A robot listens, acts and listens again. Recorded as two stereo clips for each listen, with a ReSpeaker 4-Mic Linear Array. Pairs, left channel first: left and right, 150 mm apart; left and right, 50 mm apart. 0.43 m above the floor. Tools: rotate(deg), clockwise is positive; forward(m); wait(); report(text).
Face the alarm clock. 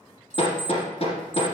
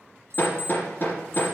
rotate(-60)
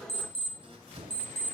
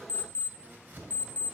rotate(-45)
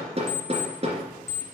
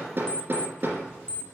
rotate(-20)
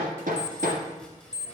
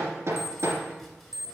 report("Found it: an alarm clock, straight ahead.")